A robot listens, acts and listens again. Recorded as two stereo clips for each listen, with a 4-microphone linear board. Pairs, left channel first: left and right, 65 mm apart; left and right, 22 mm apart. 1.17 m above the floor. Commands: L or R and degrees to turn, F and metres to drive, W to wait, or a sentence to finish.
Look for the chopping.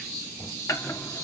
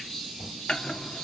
L55
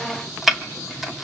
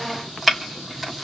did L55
Found it: chopping, straight ahead, 2 to 4 m away.